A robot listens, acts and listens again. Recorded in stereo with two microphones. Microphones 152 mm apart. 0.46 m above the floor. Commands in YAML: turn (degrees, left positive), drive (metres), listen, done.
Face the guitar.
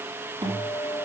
turn: -35
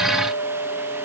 done: "Facing the guitar, over 4 m away."